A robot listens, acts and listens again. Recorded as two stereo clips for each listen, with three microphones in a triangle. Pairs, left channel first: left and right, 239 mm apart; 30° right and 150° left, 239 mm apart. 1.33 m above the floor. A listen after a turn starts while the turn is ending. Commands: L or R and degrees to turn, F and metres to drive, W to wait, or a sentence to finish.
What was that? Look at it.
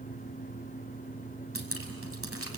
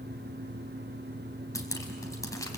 R105
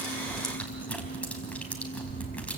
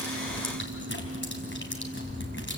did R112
Facing the dripping.